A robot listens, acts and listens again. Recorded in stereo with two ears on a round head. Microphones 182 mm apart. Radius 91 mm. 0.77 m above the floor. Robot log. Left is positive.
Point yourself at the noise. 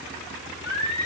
note: The singing: about 70° left or 110° left.
cmd yaw +70
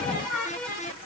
end: Found it: singing, straight ahead, over 4 m away.